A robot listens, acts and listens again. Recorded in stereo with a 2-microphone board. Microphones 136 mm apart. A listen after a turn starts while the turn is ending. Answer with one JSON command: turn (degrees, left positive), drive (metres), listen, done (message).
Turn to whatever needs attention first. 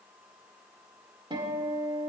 {"listen": true}
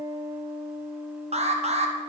{"turn": -50}
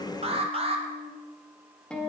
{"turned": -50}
{"turn": -60}
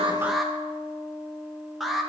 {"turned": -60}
{"done": "Facing the alarm."}